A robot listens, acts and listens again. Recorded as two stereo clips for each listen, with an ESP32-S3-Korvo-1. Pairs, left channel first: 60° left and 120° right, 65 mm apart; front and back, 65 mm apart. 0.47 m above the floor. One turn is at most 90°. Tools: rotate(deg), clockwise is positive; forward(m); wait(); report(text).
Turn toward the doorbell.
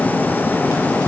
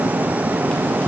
wait()
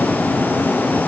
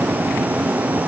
wait()
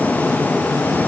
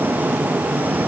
report("I can't make out a doorbell.")